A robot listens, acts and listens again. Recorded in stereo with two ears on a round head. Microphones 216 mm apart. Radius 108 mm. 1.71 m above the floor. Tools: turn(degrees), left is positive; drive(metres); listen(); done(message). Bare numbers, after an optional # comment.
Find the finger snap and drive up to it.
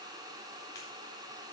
# The finger snap: about 15° left or 165° left.
turn(15)
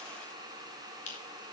# So it is at 145° left.
turn(145)
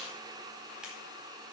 listen()
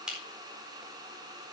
drive(1.0)
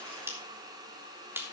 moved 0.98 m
# The finger snap is now 10° right.
turn(-10)
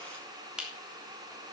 drive(1.0)
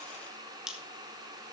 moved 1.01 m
drive(1.0)
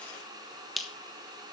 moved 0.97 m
drive(1.0)
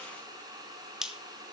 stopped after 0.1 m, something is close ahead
done("Arrived at the finger snap, straight ahead.")